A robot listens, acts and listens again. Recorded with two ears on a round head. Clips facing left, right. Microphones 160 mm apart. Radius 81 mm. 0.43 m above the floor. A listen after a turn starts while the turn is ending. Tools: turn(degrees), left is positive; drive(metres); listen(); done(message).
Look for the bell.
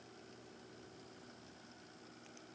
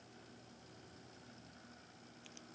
listen()
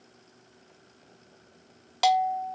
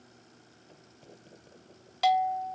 turn(degrees=60)
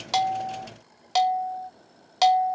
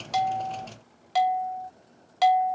turn(degrees=50)
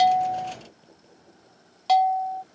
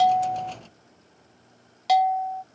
turn(degrees=-10)
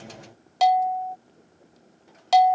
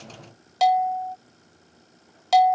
done("Facing the bell.")